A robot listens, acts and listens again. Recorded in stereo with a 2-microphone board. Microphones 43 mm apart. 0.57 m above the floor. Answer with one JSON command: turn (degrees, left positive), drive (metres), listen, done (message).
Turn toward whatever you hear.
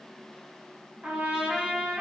{"turn": -20}
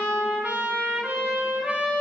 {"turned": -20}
{"turn": -135}
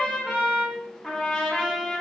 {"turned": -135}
{"turn": 10}
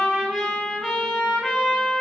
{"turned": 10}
{"done": "Found it: a trumpet, straight ahead, 1 to 2 m away."}